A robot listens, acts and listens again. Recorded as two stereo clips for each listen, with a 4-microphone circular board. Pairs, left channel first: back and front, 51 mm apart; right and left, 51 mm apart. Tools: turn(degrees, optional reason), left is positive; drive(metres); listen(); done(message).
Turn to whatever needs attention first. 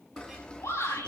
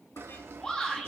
turn(degrees=-165, reason="The shout: 165° right.")
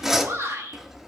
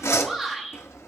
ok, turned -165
done("Facing the shout, over 4 m away.")